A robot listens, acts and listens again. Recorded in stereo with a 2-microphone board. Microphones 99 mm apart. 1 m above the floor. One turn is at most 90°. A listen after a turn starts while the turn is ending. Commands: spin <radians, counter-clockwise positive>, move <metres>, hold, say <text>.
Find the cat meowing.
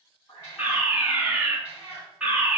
spin 0.44
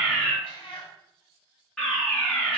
spin 1.57
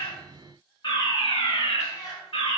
spin 0.61
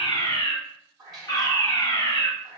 say Found it: a cat meowing, straight ahead.